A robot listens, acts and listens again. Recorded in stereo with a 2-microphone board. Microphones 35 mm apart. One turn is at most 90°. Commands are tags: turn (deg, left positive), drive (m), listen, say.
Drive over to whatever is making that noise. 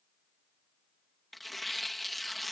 <turn deg="30"/>
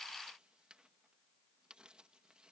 <listen/>
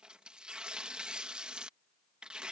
<turn deg="-25"/>
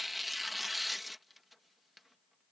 <drive m="1.0"/>
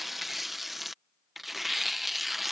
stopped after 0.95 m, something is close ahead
<say>Arrived at the tearing paper, straight ahead.</say>